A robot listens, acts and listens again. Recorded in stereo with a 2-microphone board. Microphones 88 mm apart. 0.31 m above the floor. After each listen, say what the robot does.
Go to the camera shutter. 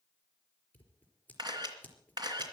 Turn 50° right.
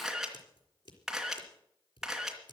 Drive 1.0 m forward.
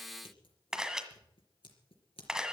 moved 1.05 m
Drive 1.0 m forward.
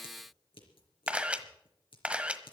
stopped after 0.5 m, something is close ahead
Turn 15° right.
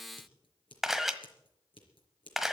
I am next to the camera shutter.